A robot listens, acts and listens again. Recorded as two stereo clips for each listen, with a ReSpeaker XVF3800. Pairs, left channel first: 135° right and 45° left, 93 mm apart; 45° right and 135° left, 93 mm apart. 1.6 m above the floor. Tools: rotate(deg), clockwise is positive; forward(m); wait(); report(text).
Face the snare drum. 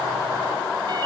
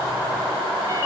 wait()
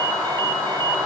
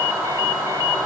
wait()
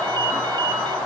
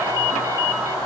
report("I can't make out a snare drum to turn to.")